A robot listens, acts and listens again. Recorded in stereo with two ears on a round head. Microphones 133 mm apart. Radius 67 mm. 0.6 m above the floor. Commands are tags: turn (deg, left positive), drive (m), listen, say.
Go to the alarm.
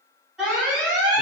<turn deg="-30"/>
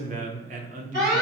<turn deg="-145"/>
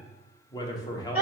<turn deg="-10"/>
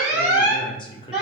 <drive m="1.0"/>
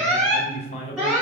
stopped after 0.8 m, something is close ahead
<turn deg="-10"/>
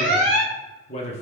<say>I am next to the alarm.</say>